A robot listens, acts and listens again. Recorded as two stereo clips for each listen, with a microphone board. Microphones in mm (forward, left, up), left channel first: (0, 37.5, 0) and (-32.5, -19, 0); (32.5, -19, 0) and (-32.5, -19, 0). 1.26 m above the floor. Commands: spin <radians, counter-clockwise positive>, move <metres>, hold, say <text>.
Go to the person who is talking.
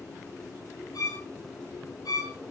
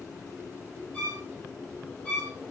hold
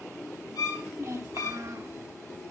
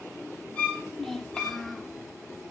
spin -1.48
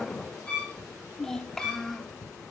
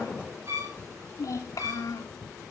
spin -0.35
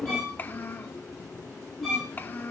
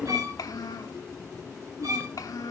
move 1.0
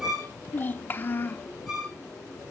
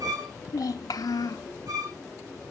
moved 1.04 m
move 1.0
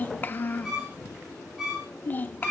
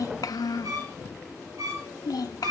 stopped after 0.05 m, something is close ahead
say Arrived at the child speaking, straight ahead.